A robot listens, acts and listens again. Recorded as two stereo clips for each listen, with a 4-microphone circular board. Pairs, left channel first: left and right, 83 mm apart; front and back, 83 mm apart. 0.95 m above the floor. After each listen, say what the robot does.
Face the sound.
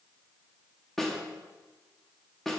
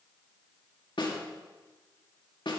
Facing the snare drum, 1 to 2 m away.